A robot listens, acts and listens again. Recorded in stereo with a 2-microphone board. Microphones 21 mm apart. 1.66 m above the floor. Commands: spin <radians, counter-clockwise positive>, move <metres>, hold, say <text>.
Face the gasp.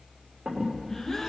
spin 0.26
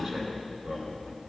hold
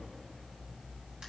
say I heard a gasp, but can't make it out now. It was about straight ahead or 150° left.